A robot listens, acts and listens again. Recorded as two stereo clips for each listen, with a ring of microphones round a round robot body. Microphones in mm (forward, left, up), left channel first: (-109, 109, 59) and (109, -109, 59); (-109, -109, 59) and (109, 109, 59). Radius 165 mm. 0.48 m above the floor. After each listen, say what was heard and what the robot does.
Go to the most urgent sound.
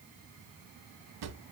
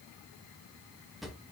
Keep listening.
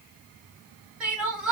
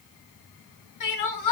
The crying: 130° right. Turn 130° right.
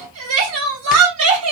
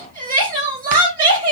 The crying is now 15° right. Turn 15° right.
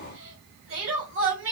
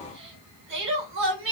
Drive 1.0 m forward.
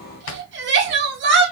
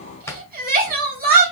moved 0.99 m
Drive 1.0 m forward.
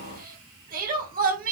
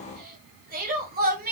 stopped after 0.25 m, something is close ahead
I am next to the crying.